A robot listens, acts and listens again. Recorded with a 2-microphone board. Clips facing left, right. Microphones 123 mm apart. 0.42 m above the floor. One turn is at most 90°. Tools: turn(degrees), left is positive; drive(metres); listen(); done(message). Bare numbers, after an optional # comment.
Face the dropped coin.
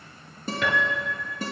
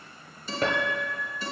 listen()
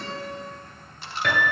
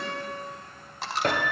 turn(-90)
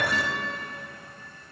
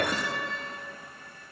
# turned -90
done("Facing where the dropped coin came from. I can't hear it now.")